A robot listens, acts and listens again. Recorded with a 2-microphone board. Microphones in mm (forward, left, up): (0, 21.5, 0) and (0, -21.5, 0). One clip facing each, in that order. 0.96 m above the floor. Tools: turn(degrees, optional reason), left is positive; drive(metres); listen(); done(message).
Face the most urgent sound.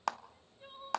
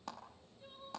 turn(degrees=35, reason="The crying: about 35° left or 145° left.")
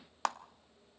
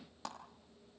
listen()
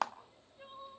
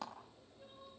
turn(degrees=110, reason="So it is at 110° left.")
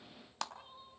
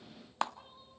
turn(degrees=15, reason="The crying is now 15° left.")
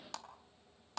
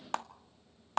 listen()
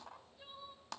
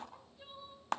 done("Facing the crying, 2 to 4 m away.")